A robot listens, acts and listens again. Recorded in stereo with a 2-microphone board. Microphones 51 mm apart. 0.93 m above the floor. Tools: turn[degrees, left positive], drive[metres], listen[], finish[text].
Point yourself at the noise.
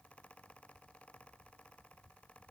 Action: listen[]
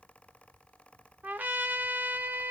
Thought: The trumpet: about 30° right or 150° right.
Action: turn[-30]
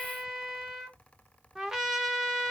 Action: finish[Facing the trumpet, under 1 m away.]